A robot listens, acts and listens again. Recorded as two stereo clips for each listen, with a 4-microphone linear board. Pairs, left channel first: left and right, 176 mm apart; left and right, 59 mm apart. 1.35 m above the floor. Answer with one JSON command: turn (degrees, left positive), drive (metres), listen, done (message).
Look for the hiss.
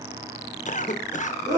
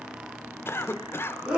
{"listen": true}
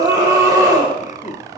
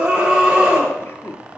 {"listen": true}
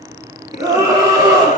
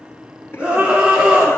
{"done": "I can't make out a hiss to turn to."}